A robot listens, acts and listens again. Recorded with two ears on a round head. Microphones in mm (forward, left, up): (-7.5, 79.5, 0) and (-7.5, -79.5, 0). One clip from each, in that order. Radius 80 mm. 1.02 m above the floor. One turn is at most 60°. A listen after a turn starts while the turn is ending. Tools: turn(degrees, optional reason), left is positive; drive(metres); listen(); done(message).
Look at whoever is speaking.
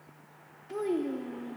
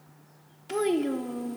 turn(degrees=-60, reason="The child speaking: about 65° right or 115° right.")
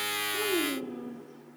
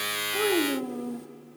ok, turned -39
turn(degrees=-60, reason="So it is at 70° right.")
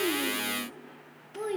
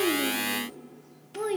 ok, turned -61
turn(degrees=-10, reason="The child speaking is now 10° right.")
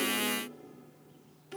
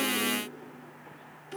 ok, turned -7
done("Facing the child speaking.")